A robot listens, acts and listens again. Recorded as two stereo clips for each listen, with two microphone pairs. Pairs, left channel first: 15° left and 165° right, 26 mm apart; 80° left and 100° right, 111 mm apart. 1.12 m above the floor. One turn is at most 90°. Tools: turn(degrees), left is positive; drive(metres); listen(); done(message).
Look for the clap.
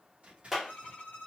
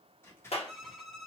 turn(degrees=90)
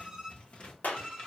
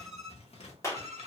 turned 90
turn(degrees=15)
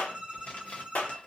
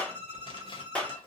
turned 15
done("Facing the clap, under 1 m away.")